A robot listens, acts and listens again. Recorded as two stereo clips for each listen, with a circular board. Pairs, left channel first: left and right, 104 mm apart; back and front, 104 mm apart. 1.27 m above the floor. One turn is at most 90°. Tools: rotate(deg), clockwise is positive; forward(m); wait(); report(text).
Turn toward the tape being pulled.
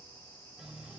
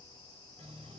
wait()
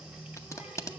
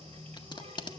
rotate(-90)
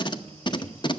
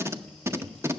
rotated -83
rotate(-60)
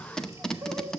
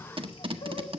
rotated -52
report("Facing the tape being pulled, under 1 m away.")